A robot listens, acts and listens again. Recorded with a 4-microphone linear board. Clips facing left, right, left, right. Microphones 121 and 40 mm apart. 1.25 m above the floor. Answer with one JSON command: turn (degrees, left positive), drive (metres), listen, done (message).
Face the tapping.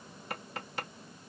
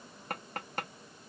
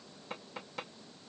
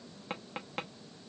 {"turn": -50}
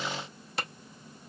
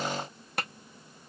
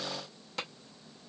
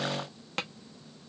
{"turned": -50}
{"turn": -70}
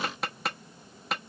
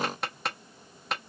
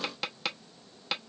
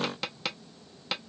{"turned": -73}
{"done": "Found it: tapping, straight ahead."}